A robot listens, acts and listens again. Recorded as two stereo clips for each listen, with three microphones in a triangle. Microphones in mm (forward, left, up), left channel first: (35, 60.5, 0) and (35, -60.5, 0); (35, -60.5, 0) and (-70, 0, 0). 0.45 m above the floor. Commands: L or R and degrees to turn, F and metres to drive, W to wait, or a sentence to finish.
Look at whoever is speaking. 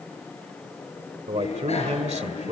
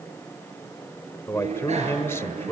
R95
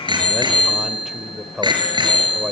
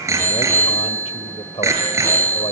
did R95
Found it: a man speaking, straight ahead, 1 to 2 m away.